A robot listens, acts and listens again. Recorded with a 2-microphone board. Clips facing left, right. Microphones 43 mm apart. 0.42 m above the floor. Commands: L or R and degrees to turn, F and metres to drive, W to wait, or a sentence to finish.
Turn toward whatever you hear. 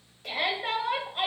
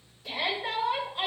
L60
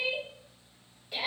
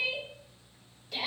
L20
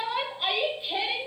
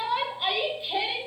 Facing the shout, 2 to 4 m away.